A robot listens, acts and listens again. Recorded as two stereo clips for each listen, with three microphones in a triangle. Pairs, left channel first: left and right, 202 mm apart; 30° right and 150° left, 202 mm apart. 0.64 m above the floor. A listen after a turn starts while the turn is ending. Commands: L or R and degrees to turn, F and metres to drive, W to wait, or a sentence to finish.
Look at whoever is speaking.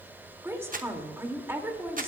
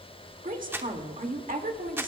R165
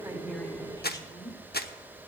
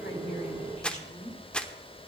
L20
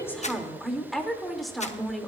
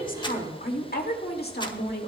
Found it: a woman speaking, straight ahead, 2 to 4 m away.